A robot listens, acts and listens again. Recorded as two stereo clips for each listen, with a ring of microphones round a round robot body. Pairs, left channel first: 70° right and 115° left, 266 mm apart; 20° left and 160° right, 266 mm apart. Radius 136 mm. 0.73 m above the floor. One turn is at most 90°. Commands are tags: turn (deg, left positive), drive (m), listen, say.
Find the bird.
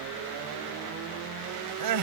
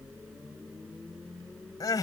<listen/>
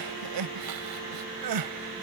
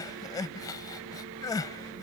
<listen/>
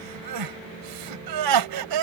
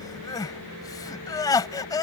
<say>I can't make out a bird to turn to.</say>